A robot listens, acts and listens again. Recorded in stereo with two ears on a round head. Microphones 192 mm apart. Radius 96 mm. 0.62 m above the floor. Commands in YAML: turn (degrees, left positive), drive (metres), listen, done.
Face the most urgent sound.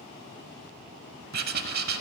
listen: true
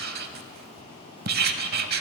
listen: true
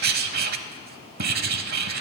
done: "I can't make out anything urgent, only writing."